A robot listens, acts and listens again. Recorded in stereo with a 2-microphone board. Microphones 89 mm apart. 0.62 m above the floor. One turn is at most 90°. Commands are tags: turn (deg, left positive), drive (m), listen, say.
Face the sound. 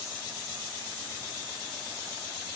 <listen/>
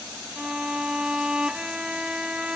<turn deg="-30"/>
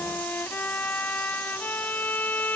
<turn deg="20"/>
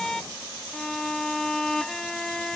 <say>Facing the violin.</say>